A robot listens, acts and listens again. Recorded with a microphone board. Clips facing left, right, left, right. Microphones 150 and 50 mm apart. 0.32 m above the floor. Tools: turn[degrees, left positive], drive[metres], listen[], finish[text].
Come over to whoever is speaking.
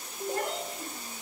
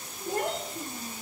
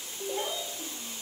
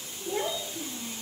Thought: The child speaking: about 35° right or 145° right.
Action: turn[-35]
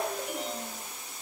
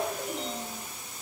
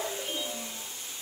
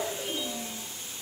Action: drive[1.0]
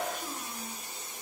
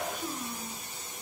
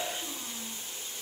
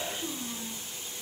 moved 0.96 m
Action: drive[1.0]
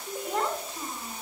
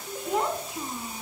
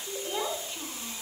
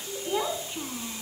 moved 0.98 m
Thought: The child speaking is now 15° right.
Action: turn[-15]
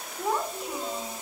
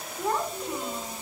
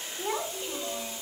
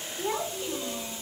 Action: drive[1.0]
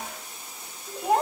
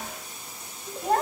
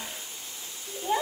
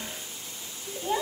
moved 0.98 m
Thought: The child speaking is now 15° left.
Action: turn[15]
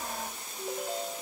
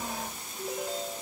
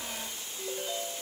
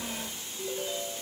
Action: drive[1.0]
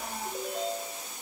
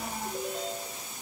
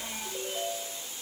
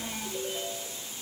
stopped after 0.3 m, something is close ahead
Action: finish[I am next to the child speaking.]